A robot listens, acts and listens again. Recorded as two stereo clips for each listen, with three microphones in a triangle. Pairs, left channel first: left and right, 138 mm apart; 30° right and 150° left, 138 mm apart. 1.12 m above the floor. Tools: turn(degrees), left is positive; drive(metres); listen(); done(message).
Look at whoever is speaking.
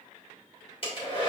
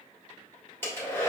listen()
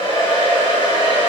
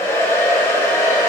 listen()
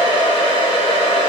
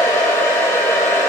done("I can't make out anyone speaking, only a hair dryer.")